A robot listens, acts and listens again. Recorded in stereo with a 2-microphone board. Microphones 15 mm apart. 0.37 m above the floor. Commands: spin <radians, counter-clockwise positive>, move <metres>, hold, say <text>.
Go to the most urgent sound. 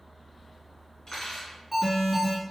spin 0.52
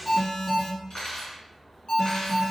spin 2.44
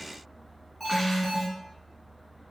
spin 0.35
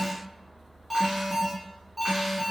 move 1.0
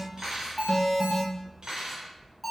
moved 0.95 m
move 1.0
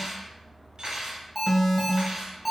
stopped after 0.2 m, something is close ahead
say Arrived at the alarm, straight ahead.